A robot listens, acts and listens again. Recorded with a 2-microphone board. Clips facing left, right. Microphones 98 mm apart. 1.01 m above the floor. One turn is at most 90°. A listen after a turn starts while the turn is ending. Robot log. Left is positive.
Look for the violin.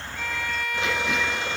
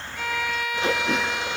cmd yaw -30
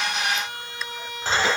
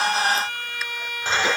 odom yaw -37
note: So it is at 30° left.
cmd yaw +30
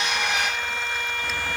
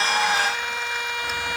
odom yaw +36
note: The violin is now 10° right.
cmd yaw -10
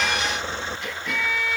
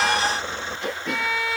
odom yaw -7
end: Facing the violin, over 4 m away.